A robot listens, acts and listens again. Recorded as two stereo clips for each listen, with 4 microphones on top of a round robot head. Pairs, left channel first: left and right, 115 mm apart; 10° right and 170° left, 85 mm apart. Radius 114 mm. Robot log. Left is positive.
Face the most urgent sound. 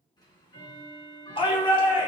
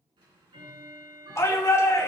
note: The shout: 45° left.
cmd yaw +45
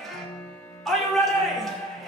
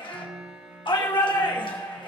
end: Found it: a shout, straight ahead.